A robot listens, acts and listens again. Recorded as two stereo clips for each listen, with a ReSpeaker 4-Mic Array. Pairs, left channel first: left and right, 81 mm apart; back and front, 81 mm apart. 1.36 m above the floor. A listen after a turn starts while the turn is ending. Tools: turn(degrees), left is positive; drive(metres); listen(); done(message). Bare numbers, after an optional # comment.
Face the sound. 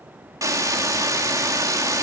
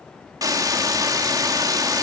# The hiss: 45° right.
turn(-45)
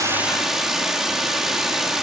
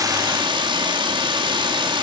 done("Facing the hiss.")